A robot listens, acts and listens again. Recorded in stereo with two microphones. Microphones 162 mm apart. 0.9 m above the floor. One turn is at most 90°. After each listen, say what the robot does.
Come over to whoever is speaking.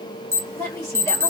Turn 20° left.
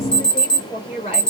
Turn 90° left.
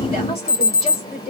Turn 35° left.
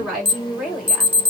Drive 1.0 m forward.
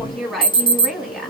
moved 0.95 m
Drive 1.0 m forward.
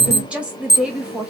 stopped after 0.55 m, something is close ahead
Turn 10° right.
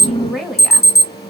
Arrived at the woman speaking, straight ahead.